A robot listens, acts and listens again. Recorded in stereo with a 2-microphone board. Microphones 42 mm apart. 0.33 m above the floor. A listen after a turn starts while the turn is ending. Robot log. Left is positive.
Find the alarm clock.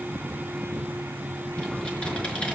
cmd idle
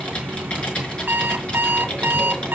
note: The alarm clock: about 55° right or 125° right.
cmd yaw -55
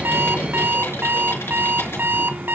note: So it is at 65° right.
cmd yaw -65
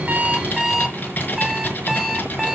note: The alarm clock is now 15° right.
cmd yaw -15
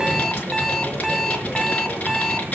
end: Facing the alarm clock, 1 to 2 m away.